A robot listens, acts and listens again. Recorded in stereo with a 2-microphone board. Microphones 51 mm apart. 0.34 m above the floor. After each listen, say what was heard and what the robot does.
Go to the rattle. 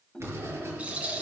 The rattle: about 25° right or 155° right. Turn 25° right.
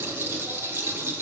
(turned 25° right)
So it is at 130° right. Turn 130° right.
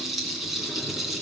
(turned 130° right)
Drive 1.0 m forward.
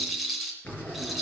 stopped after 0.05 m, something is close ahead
Blocked. The rattle is further on, straight ahead.